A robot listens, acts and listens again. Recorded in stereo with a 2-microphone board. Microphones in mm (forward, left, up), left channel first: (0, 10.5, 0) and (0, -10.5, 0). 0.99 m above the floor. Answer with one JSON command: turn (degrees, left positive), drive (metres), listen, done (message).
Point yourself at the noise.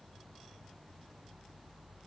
{"listen": true}
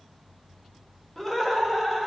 {"turn": 30}
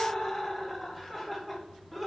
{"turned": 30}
{"turn": 30}
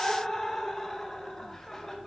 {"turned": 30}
{"turn": 155}
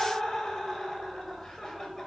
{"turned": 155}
{"turn": 15}
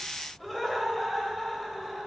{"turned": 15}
{"done": "Found it: laughter, straight ahead, 2 to 4 m away."}